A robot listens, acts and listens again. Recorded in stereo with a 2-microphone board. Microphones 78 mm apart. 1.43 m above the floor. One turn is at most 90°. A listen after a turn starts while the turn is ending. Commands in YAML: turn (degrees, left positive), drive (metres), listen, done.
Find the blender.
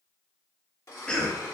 turn: 40
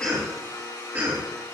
turn: 90
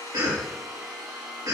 done: "Facing the blender."